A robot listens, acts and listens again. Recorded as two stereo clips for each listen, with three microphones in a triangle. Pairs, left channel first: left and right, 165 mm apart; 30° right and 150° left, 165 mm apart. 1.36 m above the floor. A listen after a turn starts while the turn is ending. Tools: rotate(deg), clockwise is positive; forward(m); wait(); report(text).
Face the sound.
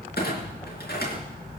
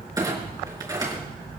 rotate(-85)
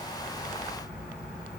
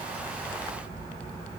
report("I heard a clunk from this way, but can't make it out now.")